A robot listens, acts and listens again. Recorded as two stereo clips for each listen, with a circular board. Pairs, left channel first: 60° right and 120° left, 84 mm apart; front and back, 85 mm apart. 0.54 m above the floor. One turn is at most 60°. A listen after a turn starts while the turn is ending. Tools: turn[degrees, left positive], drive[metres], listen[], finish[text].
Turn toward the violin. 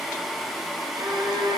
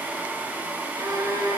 Thought: The violin: 140° left.
Action: turn[60]
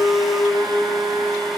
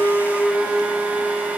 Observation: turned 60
Thought: The violin is now 95° left.
Action: turn[60]
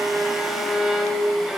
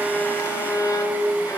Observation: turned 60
Thought: The violin is now 35° left.
Action: turn[35]
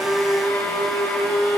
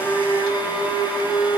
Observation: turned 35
Action: finish[Facing the violin, 1 to 2 m away.]